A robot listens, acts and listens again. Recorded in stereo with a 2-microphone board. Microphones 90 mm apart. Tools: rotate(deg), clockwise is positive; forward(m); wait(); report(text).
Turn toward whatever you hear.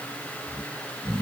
rotate(-90)
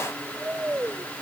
rotate(15)
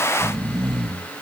report("Found it: snoring, straight ahead.")